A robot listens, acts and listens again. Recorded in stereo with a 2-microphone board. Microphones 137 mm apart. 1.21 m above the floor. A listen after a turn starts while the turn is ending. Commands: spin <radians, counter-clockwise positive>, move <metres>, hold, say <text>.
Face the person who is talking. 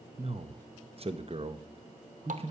spin -0.79
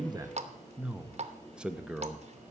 say Facing the man speaking, under 1 m away.